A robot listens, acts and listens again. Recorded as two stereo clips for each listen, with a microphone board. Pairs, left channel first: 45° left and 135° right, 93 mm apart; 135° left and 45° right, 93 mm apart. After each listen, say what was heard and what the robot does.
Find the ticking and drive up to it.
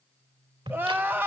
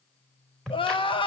The ticking: 140° right. Turn 140° right.
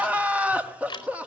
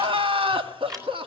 Drive 1.0 m forward.
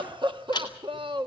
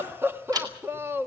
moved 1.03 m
Drive 1.0 m forward.
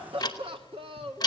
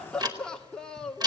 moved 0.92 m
Drive 1.0 m forward.
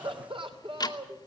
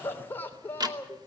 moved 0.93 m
Drive 1.0 m forward.
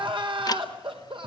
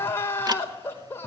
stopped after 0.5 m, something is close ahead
I am next to the ticking.